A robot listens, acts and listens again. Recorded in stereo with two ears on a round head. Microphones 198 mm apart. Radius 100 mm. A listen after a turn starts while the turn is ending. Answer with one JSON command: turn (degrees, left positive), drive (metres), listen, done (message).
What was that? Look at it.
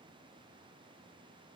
{"listen": true}
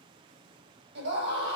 {"turn": -55}
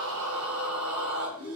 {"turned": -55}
{"turn": -70}
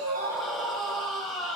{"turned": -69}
{"done": "Found it: a scream, straight ahead."}